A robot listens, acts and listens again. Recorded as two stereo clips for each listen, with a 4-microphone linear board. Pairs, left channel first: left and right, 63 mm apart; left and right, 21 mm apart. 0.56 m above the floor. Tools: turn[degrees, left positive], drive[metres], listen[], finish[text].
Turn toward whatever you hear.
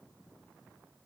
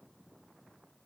Action: listen[]
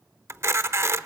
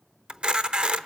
Thought: The camera shutter: about 45° right or 135° right.
Action: turn[-45]
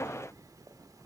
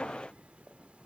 Action: listen[]
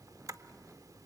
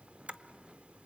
Action: listen[]
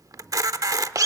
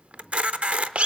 Thought: So it is at 85° right.
Action: turn[-85]
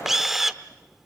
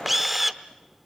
Action: finish[Facing the camera shutter, under 1 m away.]